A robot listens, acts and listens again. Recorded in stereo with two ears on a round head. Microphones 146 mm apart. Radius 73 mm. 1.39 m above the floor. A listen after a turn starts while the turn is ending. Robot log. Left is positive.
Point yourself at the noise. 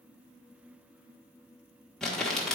cmd yaw +30
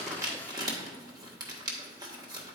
note: So it is at 30° right.
cmd yaw -30
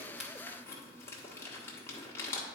note: The crumpling is now 20° left.
cmd yaw +20
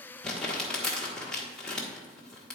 end: Found it: crumpling, straight ahead.